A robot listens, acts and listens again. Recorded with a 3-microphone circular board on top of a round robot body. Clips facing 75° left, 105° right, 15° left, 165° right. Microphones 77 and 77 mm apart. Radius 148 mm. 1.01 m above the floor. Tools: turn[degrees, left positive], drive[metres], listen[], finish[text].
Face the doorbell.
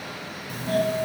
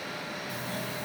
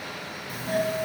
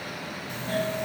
Thought: The doorbell: 95° left.
Action: turn[95]
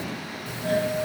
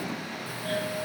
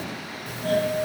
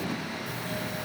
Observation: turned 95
Action: finish[Facing the doorbell.]